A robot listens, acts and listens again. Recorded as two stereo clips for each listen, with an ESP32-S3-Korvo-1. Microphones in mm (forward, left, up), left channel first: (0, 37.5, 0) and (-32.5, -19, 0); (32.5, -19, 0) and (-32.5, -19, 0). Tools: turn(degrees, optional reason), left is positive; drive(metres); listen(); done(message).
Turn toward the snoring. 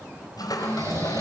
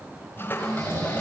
turn(degrees=-155, reason="The snoring: 155° right.")
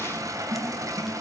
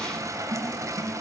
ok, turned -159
listen()
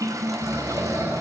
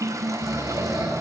done("Facing the snoring, over 4 m away.")